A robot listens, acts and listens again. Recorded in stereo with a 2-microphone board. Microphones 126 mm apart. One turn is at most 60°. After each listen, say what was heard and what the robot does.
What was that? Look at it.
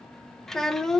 Turn 30° left.
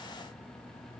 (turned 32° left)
Keep listening.
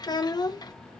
So it is at 145° left. Turn 60° left.
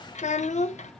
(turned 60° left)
The child speaking is now 85° left. Turn 60° left.
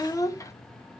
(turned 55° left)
The child speaking is now 30° left. Turn 30° left.
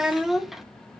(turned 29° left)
Found it: a child speaking, straight ahead.